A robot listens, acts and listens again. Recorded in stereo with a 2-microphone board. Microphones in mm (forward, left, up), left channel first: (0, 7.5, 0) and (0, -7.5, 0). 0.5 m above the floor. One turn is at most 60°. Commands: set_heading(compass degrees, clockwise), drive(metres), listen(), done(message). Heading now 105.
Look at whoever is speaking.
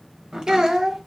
set_heading(165)
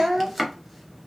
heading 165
set_heading(215)
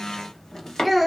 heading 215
done("Facing the child speaking, under 1 m away.")